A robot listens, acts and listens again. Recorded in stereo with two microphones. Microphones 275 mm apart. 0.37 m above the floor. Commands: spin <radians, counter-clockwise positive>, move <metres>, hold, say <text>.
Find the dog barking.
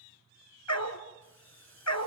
spin 1.57
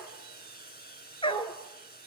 spin 0.35
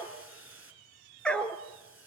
say Facing the dog barking.